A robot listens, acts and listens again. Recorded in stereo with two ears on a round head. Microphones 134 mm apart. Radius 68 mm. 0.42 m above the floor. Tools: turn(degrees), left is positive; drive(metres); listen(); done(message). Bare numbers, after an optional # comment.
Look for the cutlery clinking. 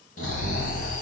listen()
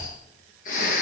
listen()
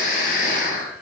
done("I can't make out cutlery clinking, only snoring.")